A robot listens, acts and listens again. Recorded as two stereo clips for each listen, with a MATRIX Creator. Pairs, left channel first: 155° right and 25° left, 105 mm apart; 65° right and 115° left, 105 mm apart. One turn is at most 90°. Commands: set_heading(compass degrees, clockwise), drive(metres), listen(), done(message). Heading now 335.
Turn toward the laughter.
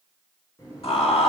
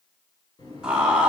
set_heading(65)
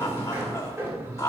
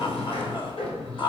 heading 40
set_heading(130)
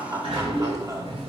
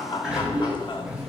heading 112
set_heading(142)
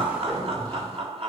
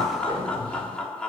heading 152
set_heading(137)
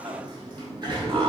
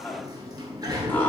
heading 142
done("Found it: laughter, straight ahead.")